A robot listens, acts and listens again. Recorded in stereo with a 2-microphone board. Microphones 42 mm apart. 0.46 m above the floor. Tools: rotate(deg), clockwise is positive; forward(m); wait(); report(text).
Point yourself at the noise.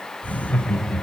rotate(-40)
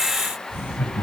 rotate(-110)
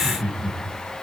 rotate(40)
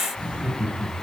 rotate(30)
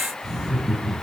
report("Found it: laughter, straight ahead.")